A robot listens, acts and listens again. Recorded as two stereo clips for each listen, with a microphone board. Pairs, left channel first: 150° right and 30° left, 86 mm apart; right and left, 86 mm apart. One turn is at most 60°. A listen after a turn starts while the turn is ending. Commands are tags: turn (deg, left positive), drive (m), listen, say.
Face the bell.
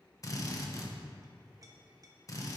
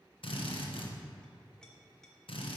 <listen/>
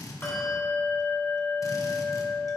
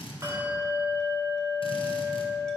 <turn deg="60"/>
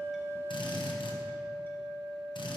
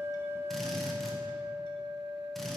<turn deg="60"/>
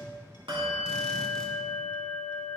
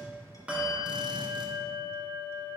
<turn deg="10"/>
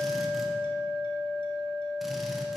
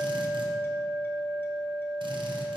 <say>Facing the bell, 2 to 4 m away.</say>